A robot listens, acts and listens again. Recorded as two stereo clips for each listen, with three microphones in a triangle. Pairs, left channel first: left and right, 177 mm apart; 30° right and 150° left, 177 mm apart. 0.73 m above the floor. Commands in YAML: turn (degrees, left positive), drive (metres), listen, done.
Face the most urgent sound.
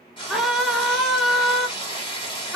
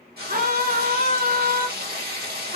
turn: 180
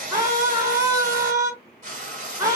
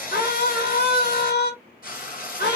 turn: -20
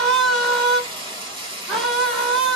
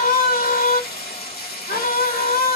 done: "Found it: a scream, straight ahead, 1 to 2 m away."